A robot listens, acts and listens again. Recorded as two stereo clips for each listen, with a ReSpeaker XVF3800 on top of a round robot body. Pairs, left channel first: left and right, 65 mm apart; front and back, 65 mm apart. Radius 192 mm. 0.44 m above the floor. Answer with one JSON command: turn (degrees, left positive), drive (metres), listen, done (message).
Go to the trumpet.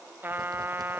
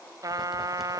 {"turn": -155}
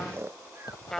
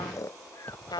{"drive": 1.0}
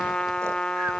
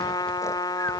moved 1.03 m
{"turn": 10}
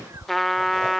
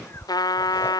{"drive": 1.0}
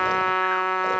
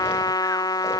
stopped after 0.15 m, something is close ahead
{"done": "Arrived at the trumpet, straight ahead."}